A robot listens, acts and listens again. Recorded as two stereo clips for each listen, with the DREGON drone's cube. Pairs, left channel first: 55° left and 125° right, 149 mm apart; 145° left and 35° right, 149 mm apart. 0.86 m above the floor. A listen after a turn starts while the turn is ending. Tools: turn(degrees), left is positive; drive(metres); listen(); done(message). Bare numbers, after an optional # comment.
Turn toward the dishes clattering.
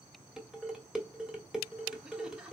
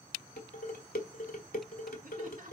# The dishes clattering: 150° left.
turn(150)
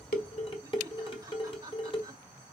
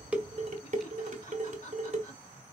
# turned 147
done("Found it: dishes clattering, straight ahead.")